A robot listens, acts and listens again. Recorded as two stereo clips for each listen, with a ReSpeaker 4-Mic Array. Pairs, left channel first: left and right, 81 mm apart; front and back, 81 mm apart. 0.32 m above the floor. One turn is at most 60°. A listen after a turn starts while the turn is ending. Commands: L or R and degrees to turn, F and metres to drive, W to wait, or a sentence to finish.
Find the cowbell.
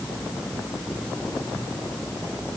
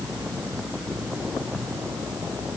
W
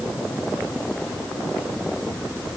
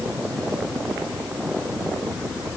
W
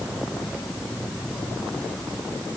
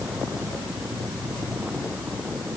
I can't make out a cowbell to turn to.